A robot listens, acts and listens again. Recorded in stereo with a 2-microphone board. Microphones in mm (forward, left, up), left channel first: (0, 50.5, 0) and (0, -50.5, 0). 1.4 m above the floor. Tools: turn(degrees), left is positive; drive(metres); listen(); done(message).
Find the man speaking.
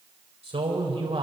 turn(degrees=-90)
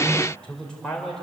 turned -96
done("Facing the man speaking, over 4 m away.")